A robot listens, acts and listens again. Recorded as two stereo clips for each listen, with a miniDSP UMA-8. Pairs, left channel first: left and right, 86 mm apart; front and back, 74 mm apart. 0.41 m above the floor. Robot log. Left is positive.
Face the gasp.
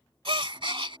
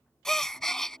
note: The gasp: 85° right.
cmd yaw -85
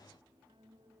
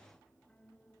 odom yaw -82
end: I heard a gasp from this way, but can't make it out now.